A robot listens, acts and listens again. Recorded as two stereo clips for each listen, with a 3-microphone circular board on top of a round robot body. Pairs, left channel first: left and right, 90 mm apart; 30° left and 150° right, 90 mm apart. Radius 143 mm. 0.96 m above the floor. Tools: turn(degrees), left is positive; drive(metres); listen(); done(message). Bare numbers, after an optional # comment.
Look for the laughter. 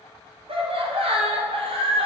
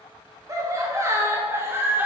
# The laughter: 80° right.
turn(-80)
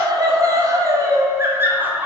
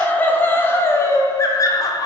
# The laughter is now 15° right.
turn(-15)
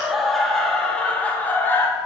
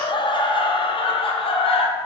# The laughter is now 25° left.
turn(25)
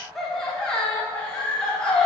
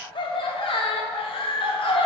# The laughter is now 10° left.
turn(10)
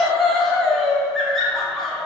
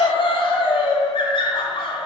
done("Facing the laughter, 1 to 2 m away.")